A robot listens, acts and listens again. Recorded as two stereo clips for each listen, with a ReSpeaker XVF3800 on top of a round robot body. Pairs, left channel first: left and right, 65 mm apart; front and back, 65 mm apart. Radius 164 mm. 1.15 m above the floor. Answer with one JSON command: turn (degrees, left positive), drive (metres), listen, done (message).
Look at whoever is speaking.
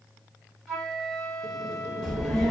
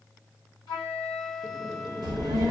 {"turn": 170}
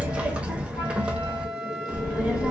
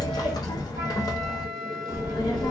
{"turn": -15}
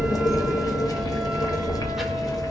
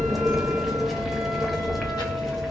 {"done": "Found it: a child speaking, straight ahead, under 1 m away."}